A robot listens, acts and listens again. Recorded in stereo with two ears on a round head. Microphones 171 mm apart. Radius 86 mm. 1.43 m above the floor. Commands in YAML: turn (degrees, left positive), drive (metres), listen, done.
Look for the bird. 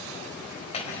listen: true
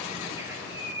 turn: -30
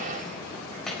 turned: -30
listen: true
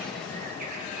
turn: -135
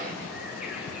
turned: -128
listen: true
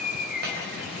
done: "Found it: a bird, straight ahead."